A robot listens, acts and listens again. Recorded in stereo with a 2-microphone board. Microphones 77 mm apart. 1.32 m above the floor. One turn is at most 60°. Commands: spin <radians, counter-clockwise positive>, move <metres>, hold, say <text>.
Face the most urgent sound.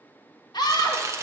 spin 1.05
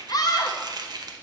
spin 0.96
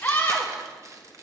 spin 0.35
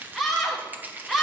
say Facing the scream, 1 to 2 m away.